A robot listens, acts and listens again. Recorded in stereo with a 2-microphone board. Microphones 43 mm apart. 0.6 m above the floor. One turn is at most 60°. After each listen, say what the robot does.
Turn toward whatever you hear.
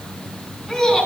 Turn 30° left.
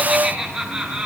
Turn 30° right.
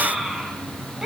Turn 15° right.
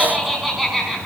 Found it: laughter, straight ahead, over 4 m away.